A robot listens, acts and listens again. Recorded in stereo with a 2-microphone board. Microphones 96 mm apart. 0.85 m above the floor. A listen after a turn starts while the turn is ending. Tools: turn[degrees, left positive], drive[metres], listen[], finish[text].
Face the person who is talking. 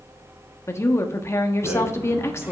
Thought: The woman speaking: about 30° left or 150° left.
Action: turn[30]
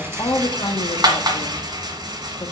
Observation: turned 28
Thought: So it is at 125° left.
Action: turn[125]
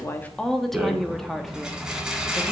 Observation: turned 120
Action: finish[Found it: a woman speaking, straight ahead, 1 to 2 m away.]